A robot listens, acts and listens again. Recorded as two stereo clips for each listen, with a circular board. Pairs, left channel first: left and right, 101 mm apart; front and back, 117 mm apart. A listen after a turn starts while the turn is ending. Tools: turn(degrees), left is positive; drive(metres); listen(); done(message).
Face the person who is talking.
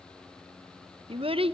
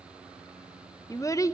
turn(degrees=-65)
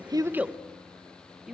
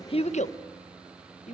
done("Facing the child speaking.")